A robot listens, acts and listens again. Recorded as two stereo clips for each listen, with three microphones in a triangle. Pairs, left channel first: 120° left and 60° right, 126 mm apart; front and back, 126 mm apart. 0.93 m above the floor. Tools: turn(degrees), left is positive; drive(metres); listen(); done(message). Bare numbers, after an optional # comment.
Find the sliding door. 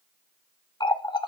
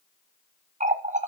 listen()
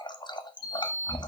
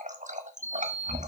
# The sliding door: 75° left.
turn(75)
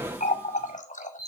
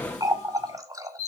# The sliding door is now 20° left.
turn(20)
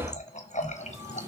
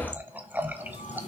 done("Found it: a sliding door, straight ahead, 2 to 4 m away.")